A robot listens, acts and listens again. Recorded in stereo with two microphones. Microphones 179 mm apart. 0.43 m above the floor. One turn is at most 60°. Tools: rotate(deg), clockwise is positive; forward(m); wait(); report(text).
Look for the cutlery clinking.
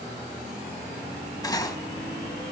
rotate(-20)
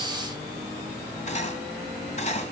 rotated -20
rotate(-60)
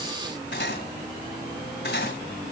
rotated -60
rotate(-60)
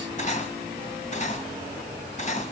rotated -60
rotate(-40)
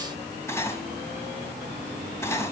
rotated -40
rotate(-15)
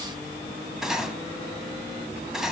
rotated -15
report("Facing the cutlery clinking, 1 to 2 m away.")